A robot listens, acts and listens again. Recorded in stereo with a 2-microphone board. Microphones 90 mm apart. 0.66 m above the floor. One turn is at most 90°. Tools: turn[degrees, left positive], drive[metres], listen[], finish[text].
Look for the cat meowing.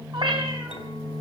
Thought: The cat meowing: about 60° right or 120° right.
Action: turn[-60]
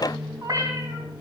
Thought: So it is at 40° right.
Action: turn[-40]
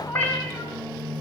Thought: The cat meowing is now 25° left.
Action: turn[25]
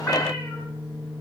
Action: listen[]
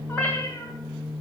Thought: The cat meowing is now 20° left.
Action: turn[20]
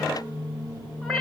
Action: finish[Found it: a cat meowing, straight ahead.]